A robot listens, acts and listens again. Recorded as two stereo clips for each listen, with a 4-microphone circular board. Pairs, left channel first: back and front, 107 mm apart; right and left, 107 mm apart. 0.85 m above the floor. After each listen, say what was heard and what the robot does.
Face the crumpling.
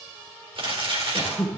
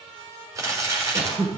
The crumpling: 30° left. Turn 30° left.
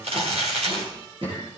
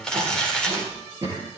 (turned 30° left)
The crumpling is now 10° right. Turn 10° right.
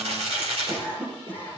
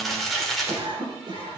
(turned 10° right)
Facing the crumpling.